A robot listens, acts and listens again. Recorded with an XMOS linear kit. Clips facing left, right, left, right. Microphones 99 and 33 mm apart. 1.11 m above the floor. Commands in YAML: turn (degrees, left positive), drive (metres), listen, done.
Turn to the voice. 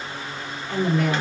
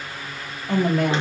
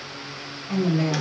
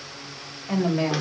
turn: -70
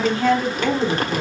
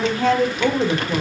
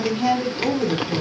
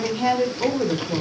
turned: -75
turn: -25
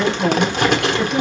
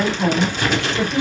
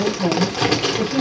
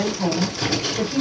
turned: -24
done: "Found it: a woman speaking, straight ahead, 2 to 4 m away."